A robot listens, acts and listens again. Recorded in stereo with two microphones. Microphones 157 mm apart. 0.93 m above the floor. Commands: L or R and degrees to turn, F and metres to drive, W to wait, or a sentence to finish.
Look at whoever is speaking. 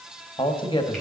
L30
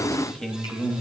Facing the man speaking.